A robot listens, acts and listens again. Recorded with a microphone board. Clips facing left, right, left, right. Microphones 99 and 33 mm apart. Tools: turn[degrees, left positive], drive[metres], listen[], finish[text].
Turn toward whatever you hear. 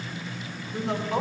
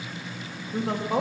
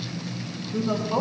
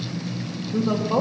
Thought: The woman speaking: about 45° right or 135° right.
Action: turn[-45]
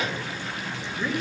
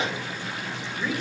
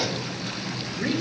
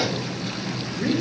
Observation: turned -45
Thought: So it is at 15° left.
Action: turn[15]
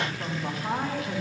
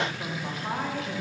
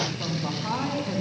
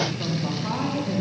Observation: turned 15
Thought: The woman speaking is now 10° left.
Action: turn[10]
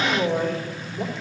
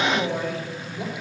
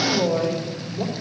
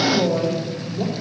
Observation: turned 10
Action: finish[Found it: a woman speaking, straight ahead.]